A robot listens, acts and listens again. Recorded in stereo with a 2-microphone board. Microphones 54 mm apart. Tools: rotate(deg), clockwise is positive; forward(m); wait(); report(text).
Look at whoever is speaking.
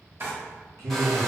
rotate(90)
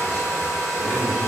wait()
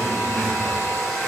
wait()
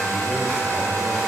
report("I heard a man speaking from this way, but can't make it out now.")